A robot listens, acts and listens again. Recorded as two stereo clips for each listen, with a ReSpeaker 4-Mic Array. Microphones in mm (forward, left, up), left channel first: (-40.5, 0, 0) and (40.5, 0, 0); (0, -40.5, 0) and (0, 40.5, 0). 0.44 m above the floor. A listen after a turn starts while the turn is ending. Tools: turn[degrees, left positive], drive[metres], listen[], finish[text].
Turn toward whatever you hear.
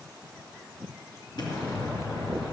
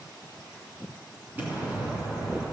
Thought: The explosion: 155° left.
Action: turn[155]
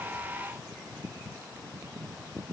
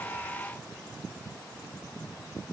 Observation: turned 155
Action: finish[Facing where the explosion came from. I can't hear it now.]